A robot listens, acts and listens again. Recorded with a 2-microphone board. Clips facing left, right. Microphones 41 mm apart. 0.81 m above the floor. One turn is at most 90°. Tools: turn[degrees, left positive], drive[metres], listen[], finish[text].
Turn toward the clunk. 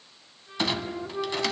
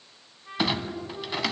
Action: turn[-30]
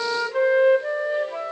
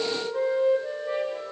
Action: listen[]
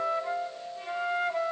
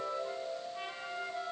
Action: finish[I heard a clunk, but can't make it out now. It was about 20° left or 140° right.]